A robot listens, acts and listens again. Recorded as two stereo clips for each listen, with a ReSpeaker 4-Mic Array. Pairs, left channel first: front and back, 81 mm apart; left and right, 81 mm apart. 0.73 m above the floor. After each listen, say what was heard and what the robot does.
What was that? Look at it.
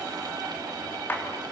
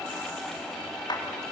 The clap: 65° left. Turn 65° left.
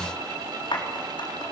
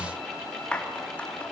The clap is now 15° left. Turn 15° left.
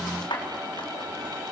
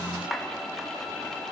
Found it: a clap, straight ahead.